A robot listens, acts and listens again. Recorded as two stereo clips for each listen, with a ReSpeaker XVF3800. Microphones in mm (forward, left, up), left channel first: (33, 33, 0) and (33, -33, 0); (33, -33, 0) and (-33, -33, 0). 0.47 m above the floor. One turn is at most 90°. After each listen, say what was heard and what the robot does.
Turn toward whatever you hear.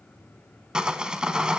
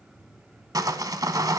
The sawing: 165° right. Turn 90° right.
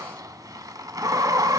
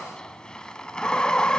The sawing is now 75° right. Turn 75° right.
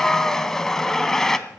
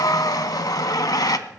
The sawing is now 10° left. Turn 10° left.
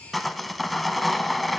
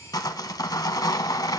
Found it: sawing, straight ahead.